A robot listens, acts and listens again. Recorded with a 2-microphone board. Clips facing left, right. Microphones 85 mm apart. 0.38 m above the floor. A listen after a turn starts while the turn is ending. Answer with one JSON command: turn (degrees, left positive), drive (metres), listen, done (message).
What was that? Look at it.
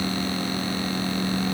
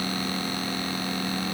{"listen": true}
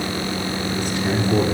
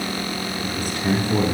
{"turn": -50}
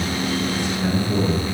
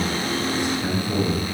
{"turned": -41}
{"turn": -15}
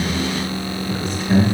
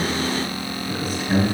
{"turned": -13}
{"done": "Found it: a man speaking, straight ahead."}